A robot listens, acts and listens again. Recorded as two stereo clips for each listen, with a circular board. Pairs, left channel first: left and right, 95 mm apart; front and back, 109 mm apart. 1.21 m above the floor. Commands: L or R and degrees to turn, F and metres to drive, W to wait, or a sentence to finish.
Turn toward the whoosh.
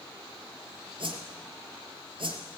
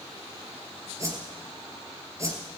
R115
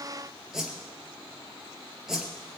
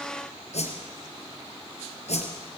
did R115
Found it: a whoosh, straight ahead.